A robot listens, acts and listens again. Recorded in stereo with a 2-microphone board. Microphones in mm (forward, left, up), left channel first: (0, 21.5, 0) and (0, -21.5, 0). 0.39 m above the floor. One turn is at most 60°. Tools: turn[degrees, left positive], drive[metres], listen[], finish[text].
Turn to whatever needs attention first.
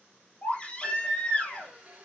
Thought: The baby crying: about 20° left or 160° left.
Action: turn[20]
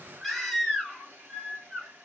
Action: finish[Facing the baby crying.]